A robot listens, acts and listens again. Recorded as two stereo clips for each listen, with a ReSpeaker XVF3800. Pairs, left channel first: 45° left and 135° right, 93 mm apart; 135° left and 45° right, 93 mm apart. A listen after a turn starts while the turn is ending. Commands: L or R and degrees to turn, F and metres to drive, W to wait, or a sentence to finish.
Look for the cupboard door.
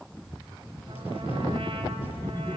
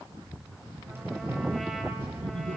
L20
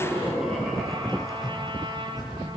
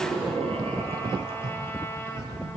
Facing the cupboard door, over 4 m away.